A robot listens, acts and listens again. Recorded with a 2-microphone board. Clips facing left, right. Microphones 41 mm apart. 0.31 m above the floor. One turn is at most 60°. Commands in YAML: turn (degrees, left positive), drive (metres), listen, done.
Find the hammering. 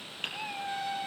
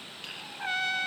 turn: 45
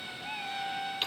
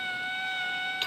listen: true
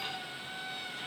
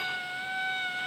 listen: true
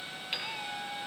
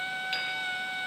done: "I heard hammering, but can't make it out now. It was about straight ahead or 90° left."